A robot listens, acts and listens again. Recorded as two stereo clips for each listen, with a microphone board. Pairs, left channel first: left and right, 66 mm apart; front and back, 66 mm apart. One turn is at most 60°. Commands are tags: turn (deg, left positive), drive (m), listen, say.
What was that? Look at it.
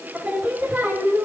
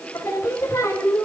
<turn deg="-40"/>
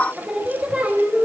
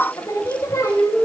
<turn deg="-30"/>
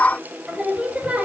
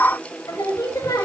<turn deg="-25"/>
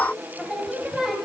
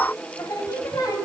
<turn deg="-10"/>
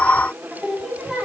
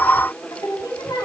<say>Facing the singing, 2 to 4 m away.</say>